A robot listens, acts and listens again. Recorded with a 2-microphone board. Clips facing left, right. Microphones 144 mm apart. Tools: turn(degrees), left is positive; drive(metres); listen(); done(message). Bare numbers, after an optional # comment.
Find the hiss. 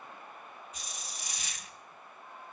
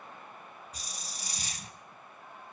# The hiss: about 35° right or 145° right.
turn(-35)
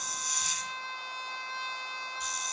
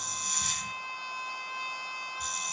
# So it is at 105° right.
turn(-105)
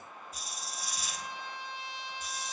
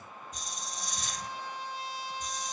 done("Facing the hiss.")